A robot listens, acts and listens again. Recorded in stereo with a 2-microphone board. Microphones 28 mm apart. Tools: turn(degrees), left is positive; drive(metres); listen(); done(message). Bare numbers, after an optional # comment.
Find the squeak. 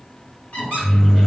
# The squeak: about 55° left or 125° left.
turn(55)
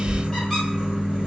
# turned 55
listen()
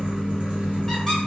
listen()
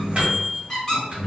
# So it is at 20° left.
turn(20)
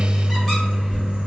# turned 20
listen()
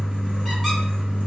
listen()
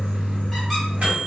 done("I heard a squeak from this way, but can't make it out now.")